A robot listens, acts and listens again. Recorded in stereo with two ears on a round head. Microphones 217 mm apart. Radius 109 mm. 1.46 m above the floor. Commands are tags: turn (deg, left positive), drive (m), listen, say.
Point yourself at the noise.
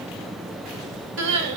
<turn deg="-50"/>
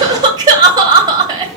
<turn deg="-20"/>
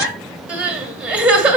<say>Found it: crying, straight ahead.</say>